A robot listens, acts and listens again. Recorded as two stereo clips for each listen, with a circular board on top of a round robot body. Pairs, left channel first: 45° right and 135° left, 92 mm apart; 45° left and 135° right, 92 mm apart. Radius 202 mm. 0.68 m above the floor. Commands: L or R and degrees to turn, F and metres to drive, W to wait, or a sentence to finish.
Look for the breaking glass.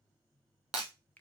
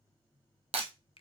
R145
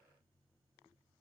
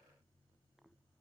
I heard breaking glass from this way, but can't make it out now.